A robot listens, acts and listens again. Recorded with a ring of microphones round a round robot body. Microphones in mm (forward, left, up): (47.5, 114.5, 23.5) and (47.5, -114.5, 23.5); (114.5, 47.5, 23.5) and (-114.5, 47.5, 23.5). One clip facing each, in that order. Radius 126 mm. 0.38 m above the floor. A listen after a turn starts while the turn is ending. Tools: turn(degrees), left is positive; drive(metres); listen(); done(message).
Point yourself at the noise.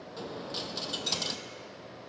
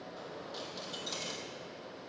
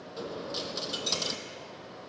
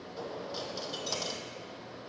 turn(degrees=65)
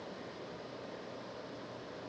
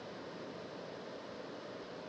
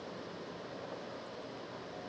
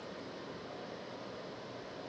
done("I heard a dropped coin from this way, but can't make it out now.")